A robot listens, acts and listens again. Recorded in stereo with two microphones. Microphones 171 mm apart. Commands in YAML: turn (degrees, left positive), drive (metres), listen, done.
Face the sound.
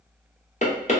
turn: 45
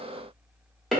done: "Found it: knocking, straight ahead."